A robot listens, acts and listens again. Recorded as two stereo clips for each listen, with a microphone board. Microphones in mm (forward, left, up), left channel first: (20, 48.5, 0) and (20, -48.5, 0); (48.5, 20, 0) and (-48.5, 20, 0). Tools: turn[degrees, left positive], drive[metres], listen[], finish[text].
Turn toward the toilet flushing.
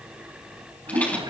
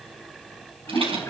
Thought: The toilet flushing: 60° right.
Action: turn[-60]
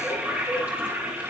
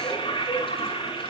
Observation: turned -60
Thought: The toilet flushing is now 20° right.
Action: turn[-20]
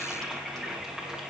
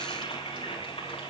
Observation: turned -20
Thought: The toilet flushing is now 10° right.
Action: turn[-10]
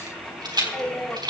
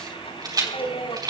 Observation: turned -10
Action: finish[Found it: a toilet flushing, straight ahead, over 4 m away.]